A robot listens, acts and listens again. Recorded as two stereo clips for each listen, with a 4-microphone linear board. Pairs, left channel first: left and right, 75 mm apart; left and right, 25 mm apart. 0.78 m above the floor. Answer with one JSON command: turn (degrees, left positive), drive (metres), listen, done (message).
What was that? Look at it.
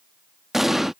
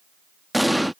{"turn": -30}
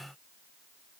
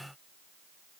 {"listen": true}
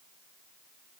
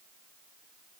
{"done": "I heard an explosion, but can't make it out now. It was about 25° left or 145° right."}